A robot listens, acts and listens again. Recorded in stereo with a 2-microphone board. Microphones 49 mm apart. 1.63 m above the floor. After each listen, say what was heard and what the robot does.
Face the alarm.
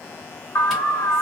The alarm: about 70° left or 110° left. Turn 70° left.
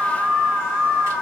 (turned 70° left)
Facing the alarm.